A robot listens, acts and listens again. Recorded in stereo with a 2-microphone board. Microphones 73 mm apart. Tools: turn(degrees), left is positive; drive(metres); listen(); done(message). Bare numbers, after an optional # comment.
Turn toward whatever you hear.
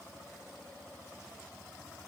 listen()
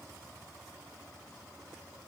listen()
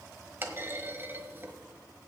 # The clunk: about 30° right or 150° right.
turn(-30)
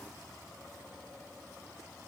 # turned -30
listen()
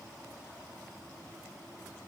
done("I heard a clunk, but can't make it out now. It was about straight ahead or 120° right.")